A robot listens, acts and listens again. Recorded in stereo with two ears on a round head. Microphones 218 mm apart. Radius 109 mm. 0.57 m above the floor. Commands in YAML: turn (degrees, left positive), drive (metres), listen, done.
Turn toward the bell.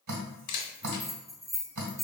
turn: 30
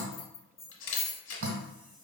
turn: 150
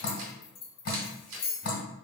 turn: 40
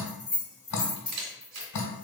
done: "Facing the bell, 1 to 2 m away."